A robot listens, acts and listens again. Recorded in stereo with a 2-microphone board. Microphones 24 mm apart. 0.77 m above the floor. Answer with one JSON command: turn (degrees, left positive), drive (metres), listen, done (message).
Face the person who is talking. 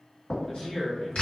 {"turn": 20}
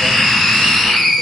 {"listen": true}
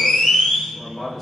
{"done": "Facing the man speaking, under 1 m away."}